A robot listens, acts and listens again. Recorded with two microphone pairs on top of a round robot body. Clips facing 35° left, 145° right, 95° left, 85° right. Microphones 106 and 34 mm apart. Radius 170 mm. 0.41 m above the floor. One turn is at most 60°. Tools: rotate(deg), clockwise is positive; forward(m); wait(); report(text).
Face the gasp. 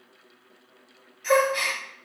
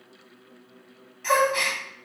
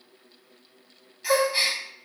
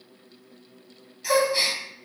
rotate(-60)
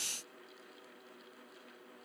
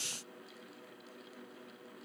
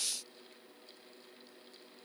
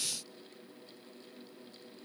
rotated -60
rotate(-60)
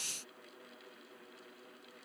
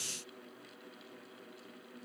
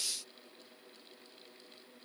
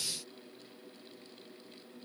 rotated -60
rotate(-45)
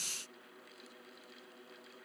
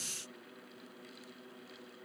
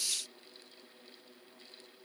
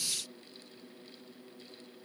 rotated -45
report("I heard a gasp from this way, but can't make it out now.")